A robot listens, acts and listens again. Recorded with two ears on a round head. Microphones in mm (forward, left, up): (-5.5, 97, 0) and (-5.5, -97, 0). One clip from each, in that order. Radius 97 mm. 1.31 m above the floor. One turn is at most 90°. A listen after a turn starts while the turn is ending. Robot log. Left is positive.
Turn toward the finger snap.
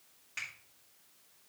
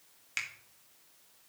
note: The finger snap: about 75° right or 105° right.
cmd yaw -75
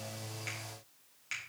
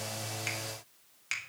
note: So it is at 25° right.
cmd yaw -25
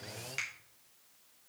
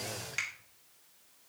end: Facing the finger snap, 1 to 2 m away.